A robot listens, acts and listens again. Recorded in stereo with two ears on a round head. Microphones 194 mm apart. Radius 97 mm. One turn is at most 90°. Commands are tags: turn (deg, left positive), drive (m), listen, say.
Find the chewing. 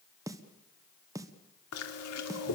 <turn deg="90"/>
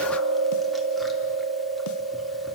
<say>Found it: chewing, straight ahead, 2 to 4 m away.</say>